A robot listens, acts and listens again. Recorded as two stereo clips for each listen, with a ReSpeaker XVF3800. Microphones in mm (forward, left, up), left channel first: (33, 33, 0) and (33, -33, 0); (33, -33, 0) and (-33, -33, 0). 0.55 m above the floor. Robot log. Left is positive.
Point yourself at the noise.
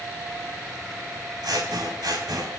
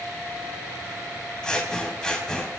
note: The scissors: 80° right.
cmd yaw -80
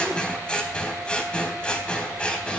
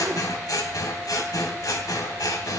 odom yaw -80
note: The scissors is now 15° left.
cmd yaw +15
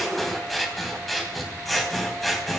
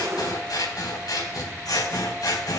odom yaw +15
end: Facing the scissors, 2 to 4 m away.